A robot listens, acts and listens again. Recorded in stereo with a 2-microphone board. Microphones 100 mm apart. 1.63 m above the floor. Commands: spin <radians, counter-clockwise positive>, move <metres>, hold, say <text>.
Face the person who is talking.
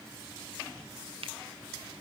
hold
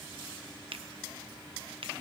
hold
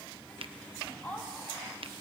spin 0.52
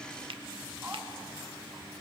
hold
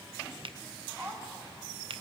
spin -0.26
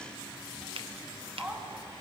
say Facing the woman speaking, 2 to 4 m away.